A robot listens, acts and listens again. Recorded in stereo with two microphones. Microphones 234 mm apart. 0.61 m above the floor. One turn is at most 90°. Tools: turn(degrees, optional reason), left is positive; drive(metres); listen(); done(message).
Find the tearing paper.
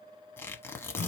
turn(degrees=30)
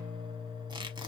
listen()
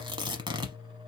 turn(degrees=-20, reason="So it is at 20° right.")
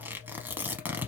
turn(degrees=-10, reason="The tearing paper is now 10° right.")
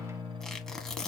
done("Facing the tearing paper.")